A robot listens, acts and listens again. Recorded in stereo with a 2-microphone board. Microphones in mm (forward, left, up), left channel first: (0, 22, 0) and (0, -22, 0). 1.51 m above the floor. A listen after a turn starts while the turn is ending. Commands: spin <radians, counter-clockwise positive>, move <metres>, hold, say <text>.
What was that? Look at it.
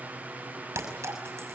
spin -1.57
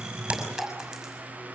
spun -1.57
say Found it: a clink, straight ahead.